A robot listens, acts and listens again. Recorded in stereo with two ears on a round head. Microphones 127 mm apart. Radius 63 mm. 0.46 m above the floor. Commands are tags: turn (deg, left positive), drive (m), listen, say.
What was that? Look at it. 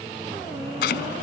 <turn deg="90"/>
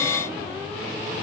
<listen/>
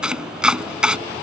<say>Facing the chopping.</say>